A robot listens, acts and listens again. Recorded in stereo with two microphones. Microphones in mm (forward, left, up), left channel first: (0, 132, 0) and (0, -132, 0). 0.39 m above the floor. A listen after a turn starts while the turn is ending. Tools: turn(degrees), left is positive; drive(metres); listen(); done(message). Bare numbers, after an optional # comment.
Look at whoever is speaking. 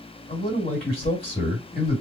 # The man speaking: about 35° left or 145° left.
turn(35)
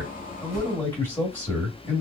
# So it is at 10° left.
turn(10)
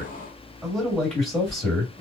done("Found it: a man speaking, straight ahead.")